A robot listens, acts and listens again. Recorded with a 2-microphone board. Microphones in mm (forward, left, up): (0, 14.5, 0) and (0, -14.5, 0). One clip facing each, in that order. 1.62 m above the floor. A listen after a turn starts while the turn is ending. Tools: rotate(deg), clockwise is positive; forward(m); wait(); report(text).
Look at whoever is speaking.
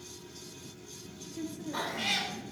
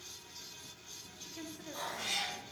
rotate(20)
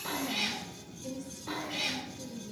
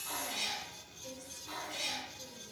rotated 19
report("Found it: a woman speaking, straight ahead, 1 to 2 m away.")